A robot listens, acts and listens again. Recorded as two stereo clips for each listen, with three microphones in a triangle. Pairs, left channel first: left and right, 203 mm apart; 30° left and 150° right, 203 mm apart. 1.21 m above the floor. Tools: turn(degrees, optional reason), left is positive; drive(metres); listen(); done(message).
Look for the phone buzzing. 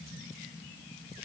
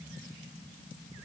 listen()
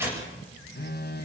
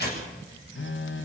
turn(degrees=50, reason="The phone buzzing: 50° left.")
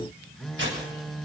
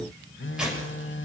done("Found it: a phone buzzing, straight ahead.")